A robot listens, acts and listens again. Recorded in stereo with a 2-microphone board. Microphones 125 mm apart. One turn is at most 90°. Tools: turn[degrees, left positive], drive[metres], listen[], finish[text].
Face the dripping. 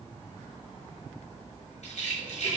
Action: listen[]
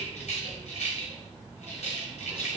Action: listen[]
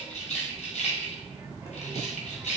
Action: finish[I can't make out dripping, only a rattle and a child speaking.]